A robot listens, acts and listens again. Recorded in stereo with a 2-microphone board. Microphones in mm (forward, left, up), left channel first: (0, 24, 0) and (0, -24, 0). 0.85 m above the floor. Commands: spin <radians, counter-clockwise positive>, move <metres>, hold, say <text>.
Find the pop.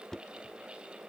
hold
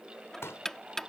spin 1.22
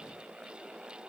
hold
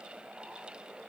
say I heard a pop, but can't make it out now. It was about straight ahead or 40° left.